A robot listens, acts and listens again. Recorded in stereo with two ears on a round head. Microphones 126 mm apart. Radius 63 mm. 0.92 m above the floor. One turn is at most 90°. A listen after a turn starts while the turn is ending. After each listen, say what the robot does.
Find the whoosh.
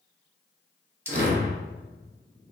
Turn 65° right.
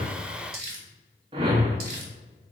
Turn 40° right.
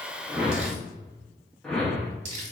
Found it: a whoosh, straight ahead.